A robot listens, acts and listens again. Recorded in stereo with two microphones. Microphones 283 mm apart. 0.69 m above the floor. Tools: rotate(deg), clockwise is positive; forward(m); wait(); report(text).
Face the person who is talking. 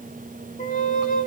wait()
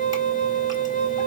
wait()
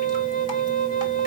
report("I can't make out anyone speaking to turn to.")